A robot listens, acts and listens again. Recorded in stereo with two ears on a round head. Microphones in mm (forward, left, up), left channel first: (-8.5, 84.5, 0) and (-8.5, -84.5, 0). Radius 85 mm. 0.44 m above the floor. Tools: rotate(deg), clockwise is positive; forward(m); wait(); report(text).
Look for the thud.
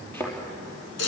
rotate(-30)
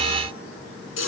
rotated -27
wait()
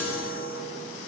report("I heard a thud, but can't make it out now. It was about 15° right or 140° left.")